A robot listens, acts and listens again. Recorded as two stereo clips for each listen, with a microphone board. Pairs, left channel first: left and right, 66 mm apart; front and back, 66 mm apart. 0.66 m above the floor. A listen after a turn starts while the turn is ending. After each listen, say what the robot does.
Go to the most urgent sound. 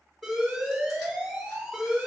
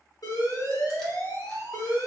Drive 1.0 m forward.
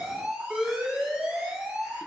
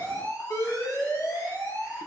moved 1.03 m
Turn 10° right.
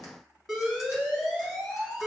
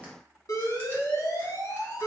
Drive 1.0 m forward.
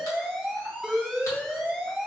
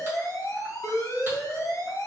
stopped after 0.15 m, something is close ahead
I am next to the alarm.